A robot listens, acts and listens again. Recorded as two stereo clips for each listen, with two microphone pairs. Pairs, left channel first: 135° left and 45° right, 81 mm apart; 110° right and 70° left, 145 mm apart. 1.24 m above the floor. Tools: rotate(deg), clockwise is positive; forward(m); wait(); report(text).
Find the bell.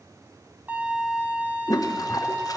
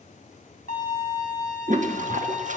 wait()
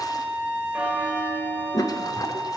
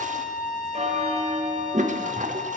rotate(-35)
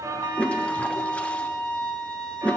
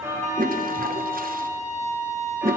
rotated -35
report("Facing the bell.")